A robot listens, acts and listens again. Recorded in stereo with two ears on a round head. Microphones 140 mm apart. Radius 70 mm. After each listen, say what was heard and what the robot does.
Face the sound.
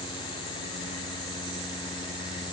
Keep listening.
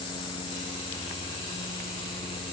Keep listening.
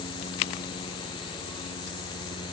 I can't make out anything.